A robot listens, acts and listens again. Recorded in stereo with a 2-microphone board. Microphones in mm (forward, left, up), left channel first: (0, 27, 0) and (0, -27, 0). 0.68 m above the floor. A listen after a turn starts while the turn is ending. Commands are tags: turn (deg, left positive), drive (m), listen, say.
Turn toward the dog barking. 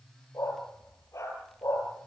<turn deg="90"/>
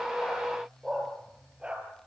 <turn deg="-20"/>
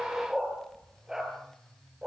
<turn deg="-15"/>
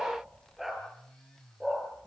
<say>Facing the dog barking.</say>